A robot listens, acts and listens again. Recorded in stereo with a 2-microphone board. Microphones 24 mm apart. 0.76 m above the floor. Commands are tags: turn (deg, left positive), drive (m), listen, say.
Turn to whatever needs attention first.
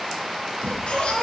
<turn deg="50"/>
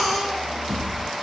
<say>Facing the baby crying.</say>